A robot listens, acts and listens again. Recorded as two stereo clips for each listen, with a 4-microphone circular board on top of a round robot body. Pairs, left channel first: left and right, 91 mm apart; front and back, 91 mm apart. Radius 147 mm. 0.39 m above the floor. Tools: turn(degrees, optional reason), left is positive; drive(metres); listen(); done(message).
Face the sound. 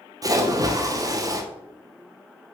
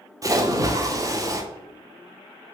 turn(degrees=-135, reason="The splash: 135° right.")
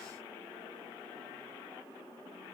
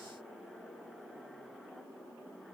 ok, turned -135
done("I heard a splash from this way, but can't make it out now.")